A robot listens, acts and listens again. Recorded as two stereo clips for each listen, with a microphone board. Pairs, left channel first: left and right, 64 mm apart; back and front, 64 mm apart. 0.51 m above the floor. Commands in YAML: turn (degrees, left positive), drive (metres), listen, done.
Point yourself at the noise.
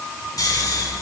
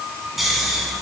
turn: 85
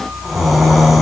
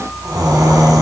done: "Facing the snoring, 1 to 2 m away."